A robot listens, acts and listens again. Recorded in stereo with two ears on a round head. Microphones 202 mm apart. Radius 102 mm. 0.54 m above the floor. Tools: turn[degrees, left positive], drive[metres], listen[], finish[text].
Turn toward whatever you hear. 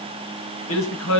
Thought: The man speaking: about 70° left or 110° left.
Action: turn[70]
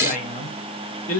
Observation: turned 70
Thought: So it is at 35° left.
Action: turn[35]
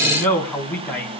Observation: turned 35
Action: finish[Facing the man speaking.]